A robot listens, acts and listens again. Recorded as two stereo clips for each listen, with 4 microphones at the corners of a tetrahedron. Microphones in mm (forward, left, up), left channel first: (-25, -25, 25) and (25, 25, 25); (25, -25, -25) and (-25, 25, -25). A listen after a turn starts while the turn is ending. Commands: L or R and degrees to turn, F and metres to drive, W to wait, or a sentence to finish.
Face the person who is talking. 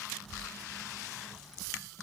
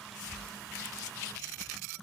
W
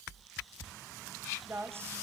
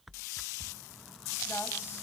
Found it: a woman speaking, straight ahead, 1 to 2 m away.